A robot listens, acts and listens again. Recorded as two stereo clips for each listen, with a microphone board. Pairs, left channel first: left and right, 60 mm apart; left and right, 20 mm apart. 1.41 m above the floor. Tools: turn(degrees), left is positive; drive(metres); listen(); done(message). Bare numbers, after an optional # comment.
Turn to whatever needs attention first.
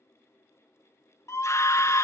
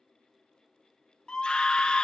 # The scream: about 50° left or 130° left.
turn(50)
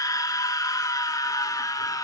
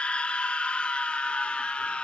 # So it is at 75° left.
turn(75)
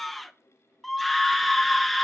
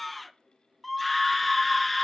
done("Facing the scream.")